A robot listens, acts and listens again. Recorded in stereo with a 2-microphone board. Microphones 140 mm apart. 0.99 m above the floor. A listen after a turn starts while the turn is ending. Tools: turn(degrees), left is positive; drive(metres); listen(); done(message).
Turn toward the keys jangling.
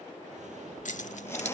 turn(degrees=60)
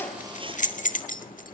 turn(degrees=80)
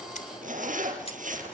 listen()
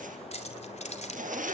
turn(degrees=60)
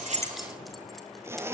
listen()
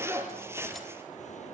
listen()
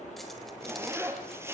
done("Facing where the keys jangling came from. I can't hear it now.")